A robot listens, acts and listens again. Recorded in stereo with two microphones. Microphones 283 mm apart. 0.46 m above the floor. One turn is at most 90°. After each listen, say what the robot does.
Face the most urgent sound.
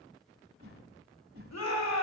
Turn 65° left.
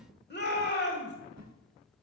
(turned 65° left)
Turn 40° left.
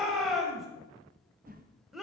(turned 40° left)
Facing the shout, 1 to 2 m away.